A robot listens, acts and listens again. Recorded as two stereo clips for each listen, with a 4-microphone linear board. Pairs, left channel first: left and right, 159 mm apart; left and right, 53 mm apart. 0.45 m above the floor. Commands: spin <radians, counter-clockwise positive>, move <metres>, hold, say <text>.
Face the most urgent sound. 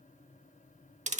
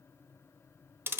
hold
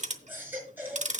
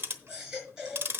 spin -0.52
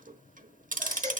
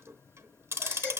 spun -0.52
spin 0.35
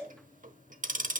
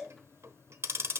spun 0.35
say Facing the baby crying.